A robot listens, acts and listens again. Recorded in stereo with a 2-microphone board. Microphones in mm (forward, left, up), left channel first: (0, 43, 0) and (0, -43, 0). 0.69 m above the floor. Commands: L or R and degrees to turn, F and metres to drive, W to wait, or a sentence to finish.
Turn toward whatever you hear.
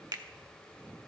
R50
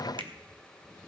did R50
R75
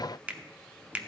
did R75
R20
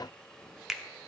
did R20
Found it: a finger snap, straight ahead, under 1 m away.